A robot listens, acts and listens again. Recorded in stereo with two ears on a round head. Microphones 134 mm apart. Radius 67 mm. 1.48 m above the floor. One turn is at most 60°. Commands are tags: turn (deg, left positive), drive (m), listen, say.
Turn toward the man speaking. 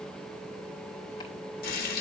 <listen/>
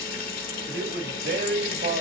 <turn deg="-60"/>
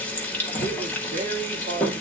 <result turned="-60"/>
<turn deg="-55"/>
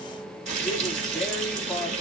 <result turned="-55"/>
<listen/>
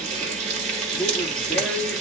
<say>Found it: a man speaking, straight ahead, 2 to 4 m away.</say>